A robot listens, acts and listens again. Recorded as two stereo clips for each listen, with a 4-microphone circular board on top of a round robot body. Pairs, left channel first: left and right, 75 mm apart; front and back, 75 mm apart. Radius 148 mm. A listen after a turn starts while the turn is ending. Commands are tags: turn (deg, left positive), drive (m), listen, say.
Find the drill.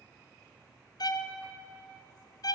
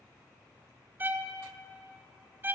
<listen/>
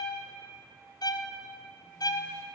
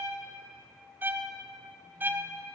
<listen/>
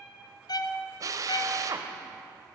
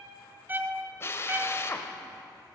<turn deg="-55"/>
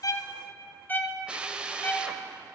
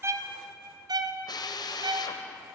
<turn deg="-15"/>
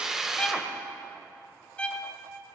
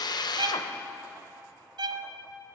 <say>Found it: a drill, straight ahead, 1 to 2 m away.</say>